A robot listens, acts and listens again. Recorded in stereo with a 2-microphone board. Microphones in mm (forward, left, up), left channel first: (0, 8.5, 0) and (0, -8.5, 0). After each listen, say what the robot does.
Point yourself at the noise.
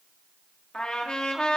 Turn 90° left.
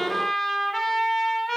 Turn 10° left.
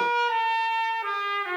Facing the trumpet.